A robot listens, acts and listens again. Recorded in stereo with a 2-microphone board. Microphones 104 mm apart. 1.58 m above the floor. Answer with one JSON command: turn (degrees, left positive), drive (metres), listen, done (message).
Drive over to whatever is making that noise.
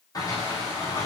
{"turn": 35}
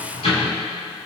{"turn": 105}
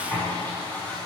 {"turn": 15}
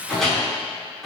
{"drive": 1.0}
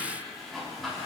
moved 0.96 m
{"drive": 1.0}
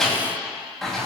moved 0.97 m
{"drive": 1.0}
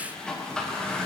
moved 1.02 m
{"turn": 10}
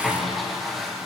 {"drive": 1.0}
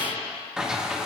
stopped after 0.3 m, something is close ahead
{"done": "Arrived at the sliding door, straight ahead."}